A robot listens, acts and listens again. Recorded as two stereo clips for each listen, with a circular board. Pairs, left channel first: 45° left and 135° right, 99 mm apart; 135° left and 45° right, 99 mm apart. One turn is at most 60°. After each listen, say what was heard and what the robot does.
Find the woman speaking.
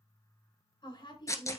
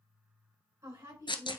The woman speaking: 20° left. Turn 20° left.
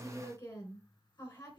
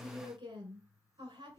Facing the woman speaking, 2 to 4 m away.